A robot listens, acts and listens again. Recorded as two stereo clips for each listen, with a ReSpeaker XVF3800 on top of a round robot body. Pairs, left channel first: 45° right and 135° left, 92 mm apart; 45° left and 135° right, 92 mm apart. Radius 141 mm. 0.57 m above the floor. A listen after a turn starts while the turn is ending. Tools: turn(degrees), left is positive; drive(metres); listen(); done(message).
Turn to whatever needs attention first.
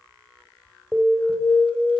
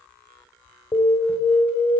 turn(degrees=50)
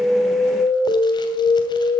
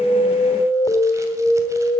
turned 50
done("Facing the alarm.")